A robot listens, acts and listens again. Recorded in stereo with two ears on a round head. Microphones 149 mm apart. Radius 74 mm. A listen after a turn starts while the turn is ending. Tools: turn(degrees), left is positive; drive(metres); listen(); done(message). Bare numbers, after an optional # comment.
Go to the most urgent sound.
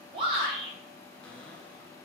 # The shout: about 35° right or 145° right.
turn(-35)
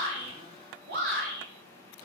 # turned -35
# So it is at 105° right.
turn(-105)
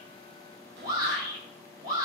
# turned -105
# The shout is now 30° right.
turn(-30)
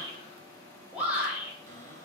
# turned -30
# The shout is now 10° right.
turn(-10)
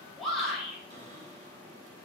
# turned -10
drive(1.0)
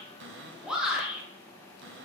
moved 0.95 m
drive(1.0)
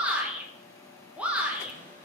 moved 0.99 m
# The shout is now 10° right.
turn(-10)
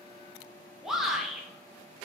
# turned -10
drive(1.0)
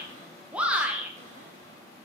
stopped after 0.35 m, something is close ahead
# The shout is now 10° right.
turn(-10)
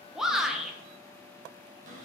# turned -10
done("I am next to the shout.")